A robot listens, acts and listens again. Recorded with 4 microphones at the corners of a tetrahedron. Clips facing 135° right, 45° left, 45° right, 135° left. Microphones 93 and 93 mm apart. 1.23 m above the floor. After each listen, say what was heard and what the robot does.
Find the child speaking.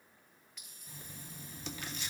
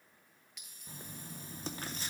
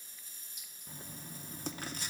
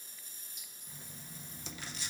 Keep listening.
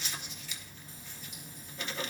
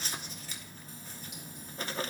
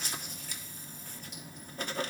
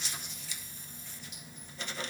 Keep listening.
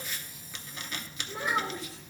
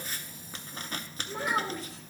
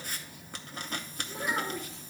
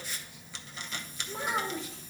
The child speaking: 85° left. Turn 85° left.
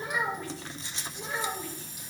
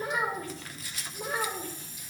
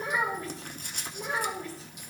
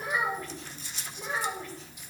Facing the child speaking.